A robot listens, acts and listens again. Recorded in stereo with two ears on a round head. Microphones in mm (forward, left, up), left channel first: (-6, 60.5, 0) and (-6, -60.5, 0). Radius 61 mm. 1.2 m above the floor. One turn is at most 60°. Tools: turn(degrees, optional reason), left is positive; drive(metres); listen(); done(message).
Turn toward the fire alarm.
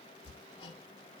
listen()
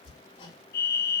turn(degrees=60)
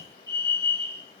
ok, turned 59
turn(degrees=25, reason="So it is at 25° left.")
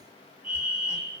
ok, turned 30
done("Facing the fire alarm.")